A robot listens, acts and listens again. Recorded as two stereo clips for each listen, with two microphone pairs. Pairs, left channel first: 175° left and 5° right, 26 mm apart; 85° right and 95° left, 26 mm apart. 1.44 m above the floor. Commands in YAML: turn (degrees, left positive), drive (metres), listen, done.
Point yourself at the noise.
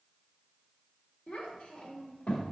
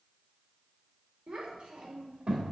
turn: 160
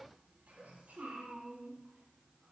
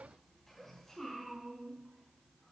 done: "Facing the child speaking."